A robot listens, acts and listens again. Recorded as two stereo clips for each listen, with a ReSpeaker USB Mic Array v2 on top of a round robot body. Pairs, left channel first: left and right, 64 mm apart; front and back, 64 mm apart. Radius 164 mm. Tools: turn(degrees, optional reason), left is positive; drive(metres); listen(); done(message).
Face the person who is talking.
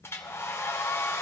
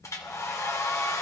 listen()
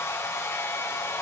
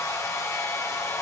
listen()
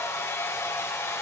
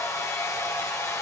done("I can't make out anyone speaking to turn to.")